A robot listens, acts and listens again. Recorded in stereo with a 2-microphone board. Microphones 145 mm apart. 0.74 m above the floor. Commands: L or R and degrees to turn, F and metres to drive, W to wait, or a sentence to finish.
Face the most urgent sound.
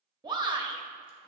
R30
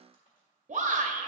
R120
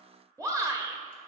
R25
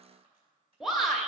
Facing the shout, 1 to 2 m away.